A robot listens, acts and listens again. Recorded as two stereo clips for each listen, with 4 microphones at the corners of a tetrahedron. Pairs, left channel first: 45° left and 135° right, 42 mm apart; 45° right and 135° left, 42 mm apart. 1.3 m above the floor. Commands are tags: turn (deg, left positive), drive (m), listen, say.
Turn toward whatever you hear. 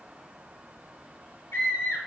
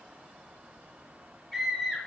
<turn deg="40"/>
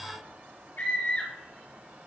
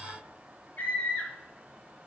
<say>Found it: a scream, straight ahead, 2 to 4 m away.</say>